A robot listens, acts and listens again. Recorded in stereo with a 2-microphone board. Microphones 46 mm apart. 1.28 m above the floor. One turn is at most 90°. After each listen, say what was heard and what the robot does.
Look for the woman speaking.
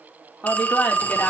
The woman speaking: about 35° left or 145° left. Turn 35° left.
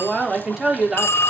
So it is at 10° right. Turn 10° right.
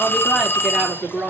The woman speaking is now 10° right. Turn 10° right.
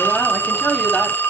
Facing the woman speaking, 2 to 4 m away.